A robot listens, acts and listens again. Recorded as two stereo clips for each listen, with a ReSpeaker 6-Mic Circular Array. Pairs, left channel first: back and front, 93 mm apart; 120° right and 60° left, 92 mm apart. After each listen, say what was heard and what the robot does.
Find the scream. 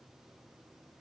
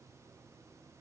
Keep listening.
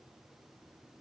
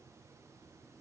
Keep listening.
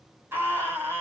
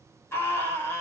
The scream: 60° right. Turn 60° right.
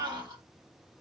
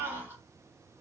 Facing the scream.